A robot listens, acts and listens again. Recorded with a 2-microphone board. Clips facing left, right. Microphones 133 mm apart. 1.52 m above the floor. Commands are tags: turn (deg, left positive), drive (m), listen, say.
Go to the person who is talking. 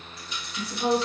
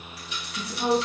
<turn deg="-60"/>
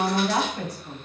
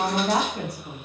<turn deg="-60"/>
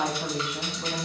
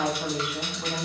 <drive m="1.0"/>
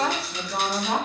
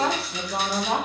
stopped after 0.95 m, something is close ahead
<turn deg="-10"/>
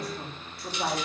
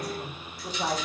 <say>Arrived at the woman speaking, straight ahead.</say>